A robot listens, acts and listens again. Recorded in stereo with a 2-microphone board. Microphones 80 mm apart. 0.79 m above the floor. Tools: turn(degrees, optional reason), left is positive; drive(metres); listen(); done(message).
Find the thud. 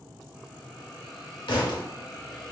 turn(degrees=90)
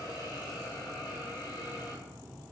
done("Facing where the thud came from. I can't hear it now.")